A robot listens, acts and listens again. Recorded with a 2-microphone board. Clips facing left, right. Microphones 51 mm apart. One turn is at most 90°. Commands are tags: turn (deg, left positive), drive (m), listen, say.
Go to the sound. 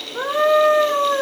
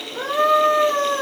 <turn deg="20"/>
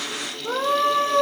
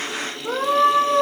<drive m="1.0"/>
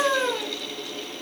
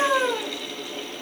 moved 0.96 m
<drive m="1.0"/>
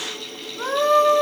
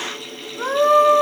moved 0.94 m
<drive m="1.0"/>
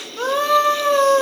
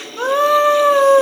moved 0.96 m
<turn deg="-10"/>
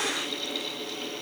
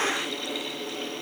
<listen/>
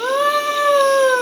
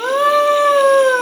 <drive m="1.0"/>
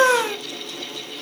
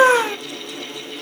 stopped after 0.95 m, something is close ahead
<turn deg="-10"/>
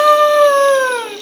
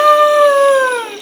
<say>I am next to the scream.</say>